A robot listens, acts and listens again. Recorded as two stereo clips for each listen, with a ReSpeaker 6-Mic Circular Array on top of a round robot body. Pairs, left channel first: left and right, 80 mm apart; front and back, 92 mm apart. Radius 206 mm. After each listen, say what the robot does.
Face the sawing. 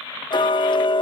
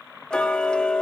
Keep listening.
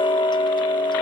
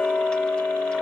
Keep listening.
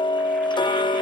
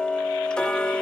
I can't make out sawing, only ticking.